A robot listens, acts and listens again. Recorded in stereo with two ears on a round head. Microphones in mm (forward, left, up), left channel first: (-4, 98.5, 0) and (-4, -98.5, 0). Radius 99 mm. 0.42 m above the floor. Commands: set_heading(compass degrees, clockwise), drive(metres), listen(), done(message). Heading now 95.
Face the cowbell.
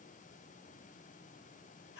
listen()
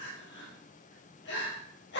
listen()
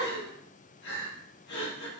done("I can't make out a cowbell to turn to.")